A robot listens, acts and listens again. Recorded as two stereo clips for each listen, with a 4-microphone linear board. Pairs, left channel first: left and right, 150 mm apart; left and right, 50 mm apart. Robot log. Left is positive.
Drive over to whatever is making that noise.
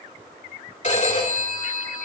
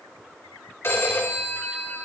note: The phone ringing: about 55° left or 125° left.
cmd yaw +55
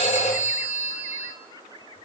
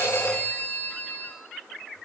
note: So it is at 65° left.
cmd yaw +65
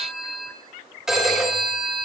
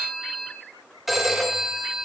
cmd fwd 1.0
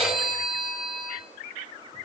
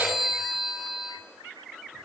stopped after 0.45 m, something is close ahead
end: Blocked. The phone ringing is further on, straight ahead.